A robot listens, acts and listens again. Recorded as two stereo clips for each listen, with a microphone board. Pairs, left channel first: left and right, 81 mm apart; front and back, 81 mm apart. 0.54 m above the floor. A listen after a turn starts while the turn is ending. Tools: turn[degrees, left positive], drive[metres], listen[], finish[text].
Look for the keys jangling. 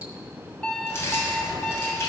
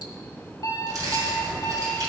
Thought: The keys jangling: 145° left.
Action: turn[145]
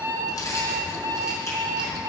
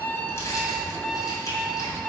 Thought: The keys jangling is now 45° left.
Action: turn[45]
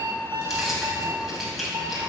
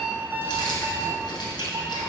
Action: finish[Facing the keys jangling.]